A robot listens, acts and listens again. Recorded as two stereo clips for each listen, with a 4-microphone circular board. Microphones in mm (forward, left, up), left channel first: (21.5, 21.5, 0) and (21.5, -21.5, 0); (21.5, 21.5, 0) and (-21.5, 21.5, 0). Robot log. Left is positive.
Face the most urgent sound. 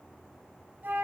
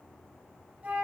cmd idle
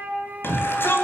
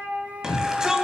note: The shout: 105° left.
cmd yaw +105
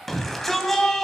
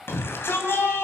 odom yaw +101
end: Found it: a shout, straight ahead.